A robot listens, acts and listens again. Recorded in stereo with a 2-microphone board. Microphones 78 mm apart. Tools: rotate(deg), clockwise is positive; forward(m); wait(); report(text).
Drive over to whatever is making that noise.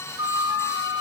rotate(65)
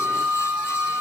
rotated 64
rotate(15)
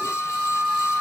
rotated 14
forward(1.0)
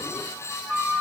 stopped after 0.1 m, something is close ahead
report("Something is in my way. I am facing the flute but have not reached it.")